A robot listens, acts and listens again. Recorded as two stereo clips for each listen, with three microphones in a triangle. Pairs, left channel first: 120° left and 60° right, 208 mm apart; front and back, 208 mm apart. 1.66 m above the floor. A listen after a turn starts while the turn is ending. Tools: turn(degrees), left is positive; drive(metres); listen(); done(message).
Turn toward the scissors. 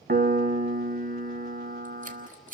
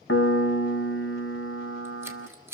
turn(degrees=-105)
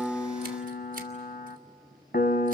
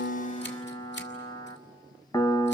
listen()
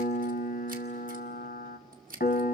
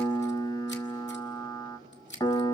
turn(degrees=-20)
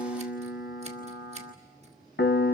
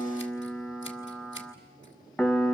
listen()
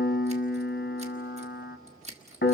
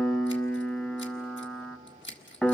done("Found it: scissors, straight ahead, 2 to 4 m away.")